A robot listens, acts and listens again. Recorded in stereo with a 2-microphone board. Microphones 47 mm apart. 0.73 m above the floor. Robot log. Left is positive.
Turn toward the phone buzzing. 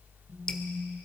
note: The phone buzzing: about 25° right or 155° right.
cmd yaw -25
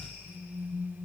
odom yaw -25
end: Found it: a phone buzzing, straight ahead.